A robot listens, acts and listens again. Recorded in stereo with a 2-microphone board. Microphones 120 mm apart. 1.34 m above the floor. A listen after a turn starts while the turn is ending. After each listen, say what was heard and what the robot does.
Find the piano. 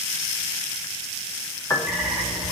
The piano: about 25° left or 155° left. Turn 25° left.
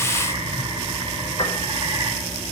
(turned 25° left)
So it is at 130° left. Turn 130° left.
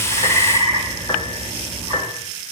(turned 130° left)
The piano is now 30° left. Turn 30° left.
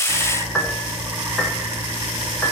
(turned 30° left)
Found it: a piano, straight ahead, 2 to 4 m away.